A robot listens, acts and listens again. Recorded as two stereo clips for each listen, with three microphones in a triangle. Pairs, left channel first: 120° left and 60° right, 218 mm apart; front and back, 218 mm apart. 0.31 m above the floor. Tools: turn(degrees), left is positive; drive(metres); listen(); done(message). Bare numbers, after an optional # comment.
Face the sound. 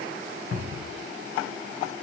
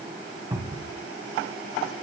# The cupboard door: 105° left.
turn(105)
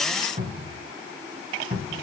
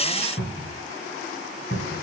# The cupboard door is now 10° right.
turn(-10)
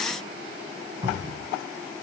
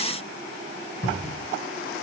done("Facing the cupboard door, 1 to 2 m away.")